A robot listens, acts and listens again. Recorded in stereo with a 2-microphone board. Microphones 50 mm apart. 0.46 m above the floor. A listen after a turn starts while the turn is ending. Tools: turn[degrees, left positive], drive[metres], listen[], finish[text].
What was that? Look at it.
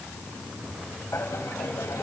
Thought: The laughter: about 70° left or 110° left.
Action: turn[70]
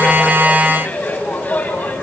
Thought: So it is at 35° left.
Action: turn[35]
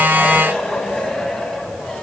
Thought: The laughter is now 10° left.
Action: turn[10]
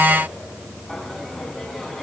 Action: finish[Facing the laughter.]